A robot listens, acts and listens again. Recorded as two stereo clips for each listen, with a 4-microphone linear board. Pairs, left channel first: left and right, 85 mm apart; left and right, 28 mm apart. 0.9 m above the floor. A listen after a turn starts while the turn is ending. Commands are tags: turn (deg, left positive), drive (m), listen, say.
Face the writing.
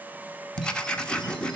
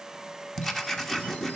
<turn deg="30"/>
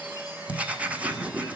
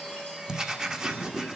<turn deg="-15"/>
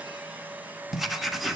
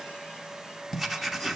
<say>Facing the writing, 1 to 2 m away.</say>